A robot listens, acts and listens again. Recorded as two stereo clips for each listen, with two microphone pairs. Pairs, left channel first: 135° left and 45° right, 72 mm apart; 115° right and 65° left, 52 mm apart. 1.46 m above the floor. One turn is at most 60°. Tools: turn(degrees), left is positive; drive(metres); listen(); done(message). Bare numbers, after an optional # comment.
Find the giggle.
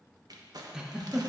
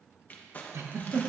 # The giggle: 35° left.
turn(35)
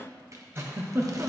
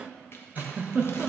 # The giggle is now 10° left.
turn(10)
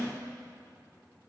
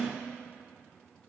listen()
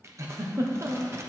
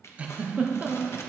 done("Found it: a giggle, straight ahead, 1 to 2 m away.")